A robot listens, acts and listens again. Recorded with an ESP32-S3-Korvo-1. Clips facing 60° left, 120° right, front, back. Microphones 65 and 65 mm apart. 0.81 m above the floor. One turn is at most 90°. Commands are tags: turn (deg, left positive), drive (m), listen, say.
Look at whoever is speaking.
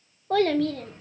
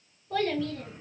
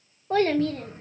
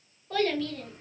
<turn deg="55"/>
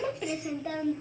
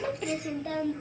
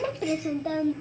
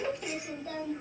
<turn deg="-20"/>
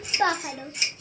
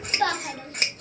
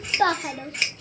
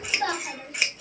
<say>Facing the child speaking.</say>